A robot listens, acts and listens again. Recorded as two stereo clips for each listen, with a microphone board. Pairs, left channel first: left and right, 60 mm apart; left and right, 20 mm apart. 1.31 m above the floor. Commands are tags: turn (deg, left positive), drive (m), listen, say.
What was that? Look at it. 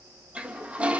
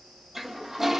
<turn deg="-20"/>
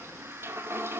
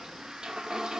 <turn deg="-140"/>
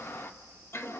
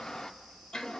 <turn deg="40"/>
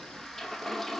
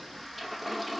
<say>Facing the toilet flushing, 1 to 2 m away.</say>